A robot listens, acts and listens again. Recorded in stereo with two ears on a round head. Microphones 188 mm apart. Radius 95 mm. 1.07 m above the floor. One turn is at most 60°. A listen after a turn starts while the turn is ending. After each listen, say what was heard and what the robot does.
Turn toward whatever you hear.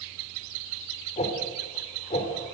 The whoosh: about 30° left or 150° left. Turn 30° left.
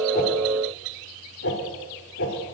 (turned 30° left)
So it is at 120° left. Turn 60° left.
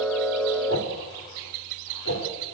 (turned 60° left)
The whoosh is now 70° left. Turn 60° left.
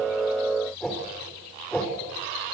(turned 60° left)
Facing the whoosh.